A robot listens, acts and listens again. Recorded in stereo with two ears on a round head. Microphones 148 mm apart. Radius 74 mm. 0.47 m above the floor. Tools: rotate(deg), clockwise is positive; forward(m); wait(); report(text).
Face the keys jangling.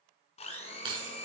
rotate(30)
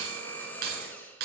rotate(105)
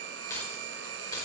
rotate(-25)
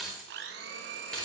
report("Facing the keys jangling, over 4 m away.")